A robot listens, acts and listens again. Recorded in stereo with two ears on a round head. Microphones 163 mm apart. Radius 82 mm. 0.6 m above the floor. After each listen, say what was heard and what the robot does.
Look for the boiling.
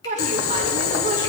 Turn 90° left.
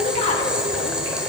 Found it: boiling, straight ahead.